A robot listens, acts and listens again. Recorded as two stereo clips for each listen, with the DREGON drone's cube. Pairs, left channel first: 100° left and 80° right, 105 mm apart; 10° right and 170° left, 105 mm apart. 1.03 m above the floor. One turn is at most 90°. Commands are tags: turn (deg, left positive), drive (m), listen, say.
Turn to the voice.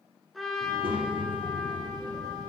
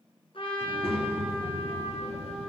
<turn deg="-30"/>
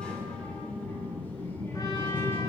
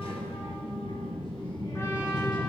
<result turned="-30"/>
<turn deg="30"/>
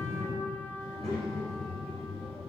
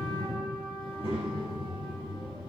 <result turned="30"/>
<turn deg="15"/>
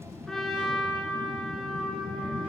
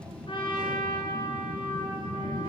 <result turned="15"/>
<say>Facing the child speaking.</say>